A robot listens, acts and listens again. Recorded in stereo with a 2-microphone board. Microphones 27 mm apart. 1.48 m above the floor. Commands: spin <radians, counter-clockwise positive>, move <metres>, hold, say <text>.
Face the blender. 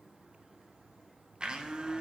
spin -0.61
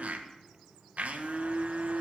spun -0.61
spin -1.92
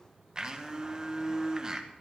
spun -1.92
spin -0.61
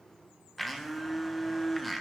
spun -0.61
say Facing the blender, 1 to 2 m away.